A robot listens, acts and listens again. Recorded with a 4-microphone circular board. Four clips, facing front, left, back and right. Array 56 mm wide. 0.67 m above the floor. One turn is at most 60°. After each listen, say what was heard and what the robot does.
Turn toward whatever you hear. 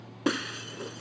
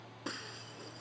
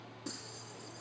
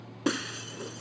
The breaking glass: 25° right. Turn 25° right.
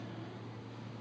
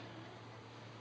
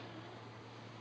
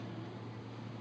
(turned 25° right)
Facing where the breaking glass came from. I can't hear it now.